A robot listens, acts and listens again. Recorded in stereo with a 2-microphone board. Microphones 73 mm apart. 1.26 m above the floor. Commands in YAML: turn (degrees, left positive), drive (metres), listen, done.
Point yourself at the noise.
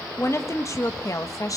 turn: 50
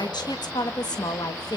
turn: 65
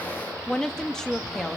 done: "Found it: a woman speaking, straight ahead."